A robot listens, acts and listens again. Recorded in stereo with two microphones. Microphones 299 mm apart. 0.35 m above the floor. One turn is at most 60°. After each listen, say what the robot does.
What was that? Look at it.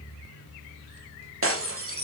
Turn 45° right.
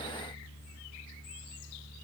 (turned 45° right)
Keep listening.
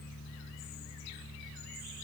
I heard breaking glass, but can't make it out now. It was about straight ahead or 90° right.